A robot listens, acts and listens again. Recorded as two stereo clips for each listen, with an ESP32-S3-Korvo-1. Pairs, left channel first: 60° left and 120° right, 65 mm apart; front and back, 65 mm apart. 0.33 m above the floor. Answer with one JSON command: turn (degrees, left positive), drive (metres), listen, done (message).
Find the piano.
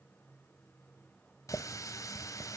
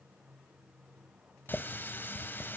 {"listen": true}
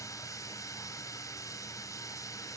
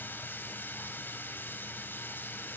{"listen": true}
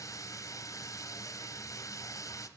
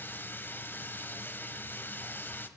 {"done": "I can't make out a piano, only a running tap."}